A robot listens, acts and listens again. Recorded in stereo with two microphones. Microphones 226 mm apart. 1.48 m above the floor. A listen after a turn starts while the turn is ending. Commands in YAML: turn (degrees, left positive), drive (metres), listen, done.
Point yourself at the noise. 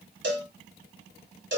turn: -50
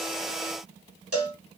turn: -80
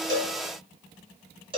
turn: -20
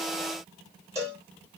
turn: -15
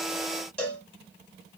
done: "Found it: a cowbell, straight ahead, 2 to 4 m away."